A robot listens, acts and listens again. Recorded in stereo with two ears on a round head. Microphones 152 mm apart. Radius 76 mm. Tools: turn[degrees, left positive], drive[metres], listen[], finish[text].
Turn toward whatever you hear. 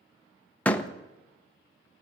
Action: turn[30]
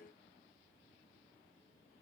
Action: listen[]
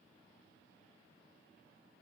Action: finish[I heard a door slam, but can't make it out now. It was about 20° right or 140° left.]